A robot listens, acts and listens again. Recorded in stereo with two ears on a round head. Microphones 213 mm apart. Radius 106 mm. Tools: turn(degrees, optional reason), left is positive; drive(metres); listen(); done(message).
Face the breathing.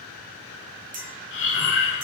turn(degrees=55, reason="The breathing: about 55° left or 125° left.")
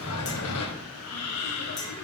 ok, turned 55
turn(degrees=70, reason="So it is at 70° left.")
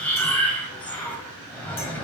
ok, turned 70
done("Facing the breathing, 1 to 2 m away.")